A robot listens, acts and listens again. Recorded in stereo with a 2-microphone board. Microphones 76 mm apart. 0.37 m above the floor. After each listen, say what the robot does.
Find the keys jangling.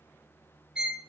Keep listening.
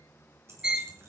Turn 35° right.
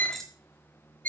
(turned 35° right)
Facing the keys jangling, 2 to 4 m away.